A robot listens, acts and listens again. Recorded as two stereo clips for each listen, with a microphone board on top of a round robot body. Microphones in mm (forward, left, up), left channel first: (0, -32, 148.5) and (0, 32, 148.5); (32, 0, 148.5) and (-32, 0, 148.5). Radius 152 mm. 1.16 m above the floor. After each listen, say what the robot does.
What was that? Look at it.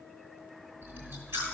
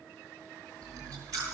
Turn 145° left.
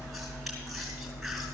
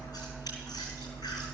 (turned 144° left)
Found it: chewing, straight ahead.